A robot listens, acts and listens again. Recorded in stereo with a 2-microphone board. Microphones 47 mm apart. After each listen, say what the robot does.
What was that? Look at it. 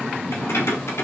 Turn 90° left.
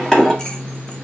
Turn 15° left.
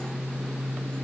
Keep listening.
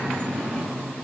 Keep listening.
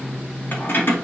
Turn 55° left.
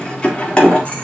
Turn 30° left.
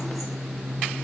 Keep listening.
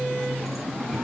Keep listening.
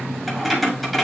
Facing the keys jangling.